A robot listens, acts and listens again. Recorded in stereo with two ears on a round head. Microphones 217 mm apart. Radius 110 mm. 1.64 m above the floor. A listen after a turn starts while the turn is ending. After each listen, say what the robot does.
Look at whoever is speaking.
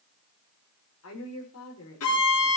Turn 65° left.
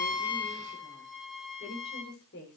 Turn 45° left.
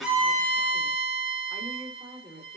Facing the woman speaking, over 4 m away.